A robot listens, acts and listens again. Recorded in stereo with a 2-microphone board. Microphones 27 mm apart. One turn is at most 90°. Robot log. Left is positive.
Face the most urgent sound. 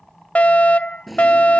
note: The fire alarm: about 60° left or 120° left.
cmd yaw +60
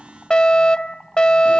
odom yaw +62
note: So it is at 40° left.
cmd yaw +40
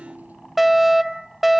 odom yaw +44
end: Found it: a fire alarm, straight ahead.